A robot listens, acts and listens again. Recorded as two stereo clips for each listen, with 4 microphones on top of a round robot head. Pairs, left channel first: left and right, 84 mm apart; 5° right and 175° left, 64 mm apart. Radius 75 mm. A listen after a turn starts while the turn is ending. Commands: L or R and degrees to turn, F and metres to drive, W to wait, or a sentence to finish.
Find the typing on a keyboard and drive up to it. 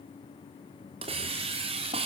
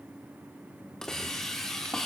W
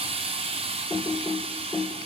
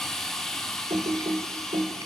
L180
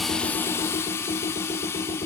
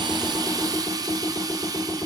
L60
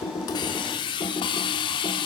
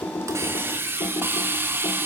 L30
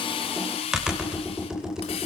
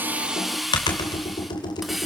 F1.0
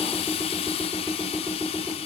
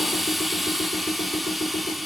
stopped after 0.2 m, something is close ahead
R10
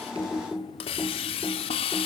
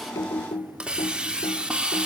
Blocked. The typing on a keyboard is further on, straight ahead.